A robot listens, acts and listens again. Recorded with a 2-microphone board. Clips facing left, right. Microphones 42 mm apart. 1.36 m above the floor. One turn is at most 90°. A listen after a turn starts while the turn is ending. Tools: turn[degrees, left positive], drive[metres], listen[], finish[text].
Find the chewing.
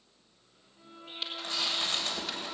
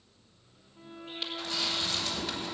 Thought: The chewing: about 40° left or 140° left.
Action: turn[40]
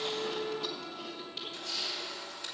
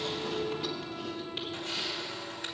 Action: finish[Facing the chewing.]